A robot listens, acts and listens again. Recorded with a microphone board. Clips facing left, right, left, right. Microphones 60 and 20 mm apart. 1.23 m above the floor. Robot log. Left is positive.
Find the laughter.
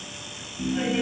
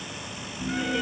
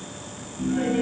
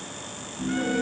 note: The laughter: about 25° left or 155° left.
cmd yaw +25
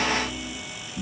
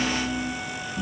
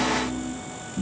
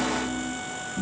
end: Found it: laughter, straight ahead, over 4 m away.